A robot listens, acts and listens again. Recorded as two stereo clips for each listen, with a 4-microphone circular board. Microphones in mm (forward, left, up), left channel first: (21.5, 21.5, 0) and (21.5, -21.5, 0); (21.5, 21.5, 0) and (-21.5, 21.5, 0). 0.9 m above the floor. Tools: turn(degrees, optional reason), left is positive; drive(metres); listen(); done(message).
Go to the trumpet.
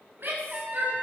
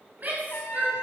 turn(degrees=-25, reason="The trumpet: 25° right.")
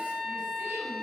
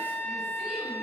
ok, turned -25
drive(metres=1.0)
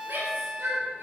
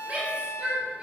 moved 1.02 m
turn(degrees=-10, reason="The trumpet is now 10° right.")
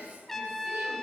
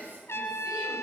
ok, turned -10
drive(metres=1.0)
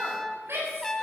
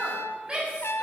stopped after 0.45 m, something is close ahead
turn(degrees=10, reason="The trumpet is now 10° left.")
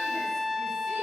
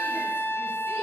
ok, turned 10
done("I am next to the trumpet.")